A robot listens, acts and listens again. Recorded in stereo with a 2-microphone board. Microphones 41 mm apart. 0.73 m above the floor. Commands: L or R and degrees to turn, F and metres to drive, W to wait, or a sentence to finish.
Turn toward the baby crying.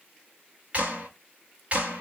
W
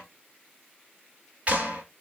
W
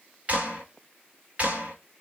I can't make out a baby crying, only a clap.